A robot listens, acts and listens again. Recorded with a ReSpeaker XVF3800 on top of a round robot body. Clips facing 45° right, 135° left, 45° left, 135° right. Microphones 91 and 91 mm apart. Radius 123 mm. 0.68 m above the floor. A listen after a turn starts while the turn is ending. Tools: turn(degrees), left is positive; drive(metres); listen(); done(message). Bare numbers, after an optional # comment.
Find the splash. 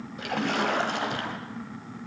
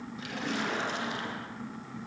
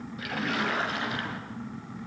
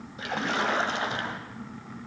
# The splash: 75° right.
turn(-75)
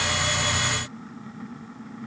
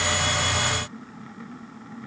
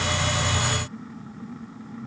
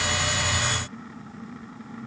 done("I heard a splash from this way, but can't make it out now.")